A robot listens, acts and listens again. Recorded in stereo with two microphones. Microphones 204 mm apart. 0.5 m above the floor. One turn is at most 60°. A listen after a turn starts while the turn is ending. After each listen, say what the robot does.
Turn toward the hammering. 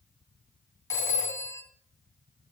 Keep listening.
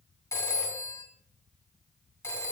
Keep listening.
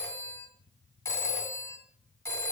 I can't make out hammering to turn to.